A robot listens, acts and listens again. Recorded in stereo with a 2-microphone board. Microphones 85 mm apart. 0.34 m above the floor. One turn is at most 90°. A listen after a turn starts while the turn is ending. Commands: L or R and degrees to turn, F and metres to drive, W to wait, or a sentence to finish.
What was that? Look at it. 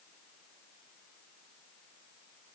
W
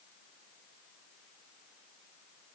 W
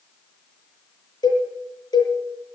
L60
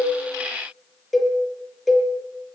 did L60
Found it: a cowbell, straight ahead.